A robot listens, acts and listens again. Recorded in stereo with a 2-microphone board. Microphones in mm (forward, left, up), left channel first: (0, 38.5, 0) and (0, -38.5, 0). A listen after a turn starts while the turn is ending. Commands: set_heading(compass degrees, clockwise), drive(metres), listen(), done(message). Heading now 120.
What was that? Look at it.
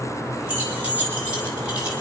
set_heading(140)
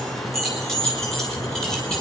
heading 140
done("Found it: keys jangling, straight ahead.")